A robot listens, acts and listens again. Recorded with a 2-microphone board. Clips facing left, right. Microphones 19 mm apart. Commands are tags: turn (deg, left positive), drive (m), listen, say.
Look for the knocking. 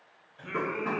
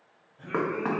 <turn deg="-65"/>
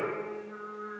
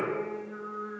<listen/>
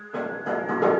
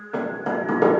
<turn deg="-35"/>
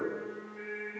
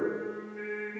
<listen/>
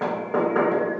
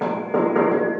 <say>Found it: knocking, straight ahead.</say>